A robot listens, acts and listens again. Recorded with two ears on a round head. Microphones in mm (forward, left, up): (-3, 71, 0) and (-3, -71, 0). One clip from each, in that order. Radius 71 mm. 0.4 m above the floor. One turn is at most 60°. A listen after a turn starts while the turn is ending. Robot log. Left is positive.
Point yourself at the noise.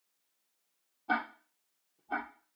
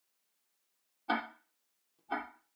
note: The ticking: about 45° right or 135° right.
cmd yaw -45
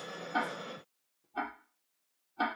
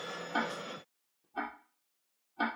end: Facing the ticking.